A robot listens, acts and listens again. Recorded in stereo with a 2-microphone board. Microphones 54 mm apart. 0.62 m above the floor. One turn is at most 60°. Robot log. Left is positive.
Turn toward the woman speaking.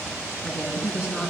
note: The woman speaking: about 45° left or 135° left.
cmd yaw +45
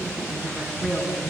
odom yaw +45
end: Facing the woman speaking, over 4 m away.